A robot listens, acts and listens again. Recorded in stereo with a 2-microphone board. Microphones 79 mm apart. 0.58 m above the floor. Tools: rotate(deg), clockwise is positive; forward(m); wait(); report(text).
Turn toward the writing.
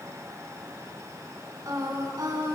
wait()
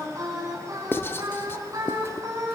rotate(-30)
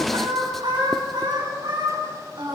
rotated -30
wait()
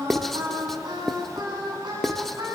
report("Found it: writing, straight ahead, under 1 m away.")